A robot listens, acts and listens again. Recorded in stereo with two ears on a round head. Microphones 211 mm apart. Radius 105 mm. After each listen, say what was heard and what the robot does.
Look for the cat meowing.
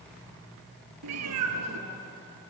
Turn 90° right.
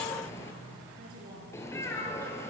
So it is at 10° left. Turn 10° left.
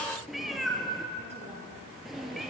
Found it: a cat meowing, straight ahead, 2 to 4 m away.